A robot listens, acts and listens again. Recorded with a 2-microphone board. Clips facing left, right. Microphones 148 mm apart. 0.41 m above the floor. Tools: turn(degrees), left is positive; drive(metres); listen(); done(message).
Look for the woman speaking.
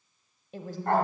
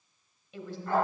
turn(degrees=45)
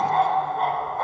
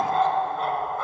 listen()
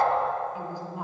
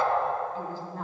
turn(degrees=15)
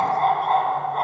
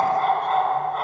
listen()
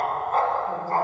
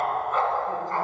listen()
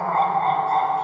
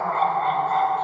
done("Facing where the woman speaking came from. I can't hear it now.")